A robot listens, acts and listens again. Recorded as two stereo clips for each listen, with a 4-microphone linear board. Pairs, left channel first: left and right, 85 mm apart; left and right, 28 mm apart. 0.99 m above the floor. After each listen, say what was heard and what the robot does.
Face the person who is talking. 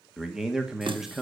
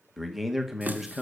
Turn 30° right.
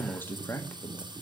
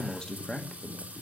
So it is at 25° left. Turn 25° left.
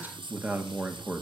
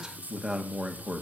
The man speaking is now 20° right. Turn 20° right.
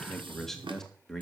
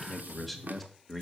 Found it: a man speaking, straight ahead.